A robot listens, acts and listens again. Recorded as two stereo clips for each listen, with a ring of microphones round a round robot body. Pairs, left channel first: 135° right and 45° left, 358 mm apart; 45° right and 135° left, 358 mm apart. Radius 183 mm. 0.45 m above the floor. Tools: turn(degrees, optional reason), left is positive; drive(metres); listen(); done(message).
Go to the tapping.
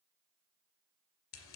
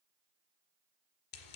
listen()
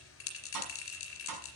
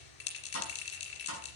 turn(degrees=10, reason="The tapping: 10° left.")
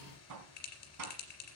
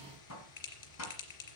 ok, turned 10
drive(metres=1.0)
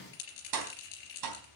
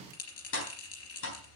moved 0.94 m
turn(degrees=10, reason="The tapping is now 10° left.")
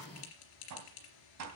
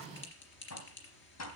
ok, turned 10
drive(metres=1.0)
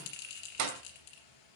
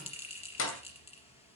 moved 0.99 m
drive(metres=1.0)
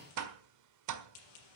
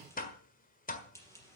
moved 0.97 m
turn(degrees=20, reason="The tapping is now 20° left.")
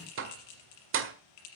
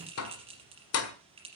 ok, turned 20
drive(metres=1.0)
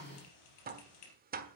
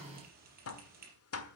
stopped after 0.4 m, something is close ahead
turn(degrees=-10, reason="The tapping is now 10° right.")
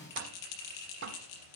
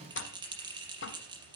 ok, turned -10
done("I am next to the tapping.")